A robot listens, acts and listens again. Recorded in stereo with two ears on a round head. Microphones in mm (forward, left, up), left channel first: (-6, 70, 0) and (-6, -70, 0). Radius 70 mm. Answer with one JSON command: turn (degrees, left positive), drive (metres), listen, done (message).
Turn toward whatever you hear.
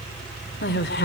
{"turn": 70}
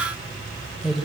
{"done": "Found it: a woman speaking, straight ahead, 2 to 4 m away."}